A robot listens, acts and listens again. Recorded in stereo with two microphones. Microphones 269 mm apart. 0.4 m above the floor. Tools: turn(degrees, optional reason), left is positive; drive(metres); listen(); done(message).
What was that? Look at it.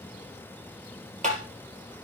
turn(degrees=-30, reason="The tapping: about 30° right or 150° right.")
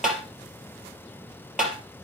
done("Found it: tapping, straight ahead, 2 to 4 m away.")